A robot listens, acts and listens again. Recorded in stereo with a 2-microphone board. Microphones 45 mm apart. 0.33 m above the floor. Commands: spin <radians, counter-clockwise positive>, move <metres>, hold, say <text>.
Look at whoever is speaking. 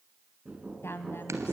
spin 0.96
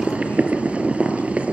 hold
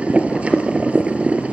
hold
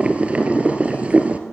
say I heard a woman speaking, but can't make it out now. It was about straight ahead or 70° left.